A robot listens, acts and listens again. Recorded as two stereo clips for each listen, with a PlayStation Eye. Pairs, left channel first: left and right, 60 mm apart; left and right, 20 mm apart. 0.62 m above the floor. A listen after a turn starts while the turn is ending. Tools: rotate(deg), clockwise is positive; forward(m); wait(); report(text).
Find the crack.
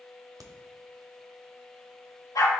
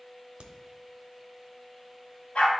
rotate(70)
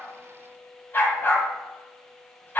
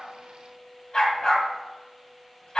wait()
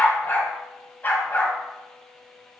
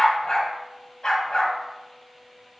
report("I heard a crack, but can't make it out now. It was about straight ahead or 40° right.")